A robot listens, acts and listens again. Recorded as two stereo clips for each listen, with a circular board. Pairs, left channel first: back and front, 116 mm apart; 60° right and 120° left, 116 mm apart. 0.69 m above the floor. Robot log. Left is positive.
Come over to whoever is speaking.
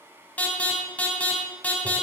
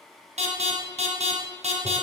cmd idle
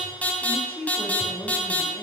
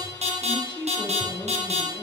note: The woman speaking: 105° right.
cmd yaw -105
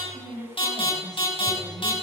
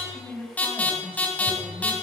note: The woman speaking is now 15° left.
cmd yaw +15
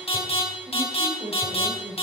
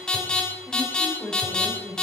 cmd fwd 1.0
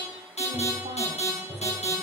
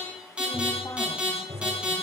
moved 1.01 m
cmd idle
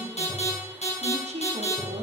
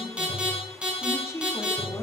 cmd fwd 1.0
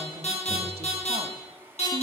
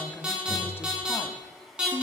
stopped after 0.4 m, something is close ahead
cmd idle
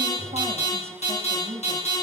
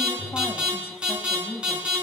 end: Arrived at the woman speaking, straight ahead.